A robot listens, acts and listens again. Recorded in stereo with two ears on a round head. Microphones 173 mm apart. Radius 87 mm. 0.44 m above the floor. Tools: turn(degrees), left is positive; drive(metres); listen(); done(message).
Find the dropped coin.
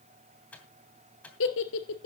listen()
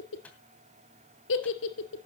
listen()
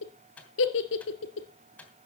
done("I can't make out a dropped coin, only a giggle and a microwave.")